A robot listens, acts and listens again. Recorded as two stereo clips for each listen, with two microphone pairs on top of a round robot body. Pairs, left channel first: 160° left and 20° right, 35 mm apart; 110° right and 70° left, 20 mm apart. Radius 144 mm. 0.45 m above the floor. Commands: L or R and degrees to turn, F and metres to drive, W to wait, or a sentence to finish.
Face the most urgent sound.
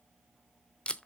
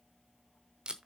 W
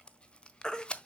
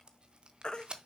R135
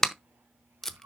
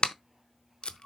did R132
W
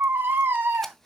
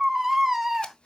Facing the baby crying, 1 to 2 m away.